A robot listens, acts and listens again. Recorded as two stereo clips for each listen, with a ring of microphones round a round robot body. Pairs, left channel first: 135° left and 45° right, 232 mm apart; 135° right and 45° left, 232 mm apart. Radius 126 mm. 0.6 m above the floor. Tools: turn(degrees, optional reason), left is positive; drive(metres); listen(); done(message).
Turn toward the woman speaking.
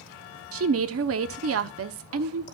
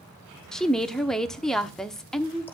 turn(degrees=-45, reason="The woman speaking: 45° right.")
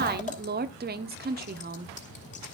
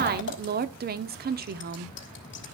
done("Found it: a woman speaking, straight ahead.")